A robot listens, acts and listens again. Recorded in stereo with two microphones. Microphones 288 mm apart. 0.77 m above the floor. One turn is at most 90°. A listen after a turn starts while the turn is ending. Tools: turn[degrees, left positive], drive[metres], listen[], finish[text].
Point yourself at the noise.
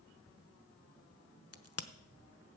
Thought: The crack: about 55° left or 125° left.
Action: turn[55]
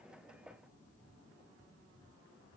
Action: listen[]
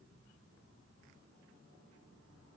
Action: finish[I heard a crack, but can't make it out now. It was about straight ahead or 70° left.]